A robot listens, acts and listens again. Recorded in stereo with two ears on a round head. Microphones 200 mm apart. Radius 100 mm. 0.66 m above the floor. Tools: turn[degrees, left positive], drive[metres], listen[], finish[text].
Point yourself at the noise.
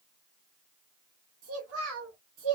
Thought: The child speaking: about 65° right or 115° right.
Action: turn[-65]
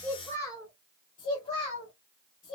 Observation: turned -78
Thought: So it is at 40° left.
Action: turn[40]
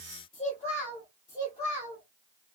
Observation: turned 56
Thought: The child speaking is now 15° left.
Action: turn[15]
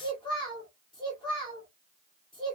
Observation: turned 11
Action: finish[Found it: a child speaking, straight ahead, 1 to 2 m away.]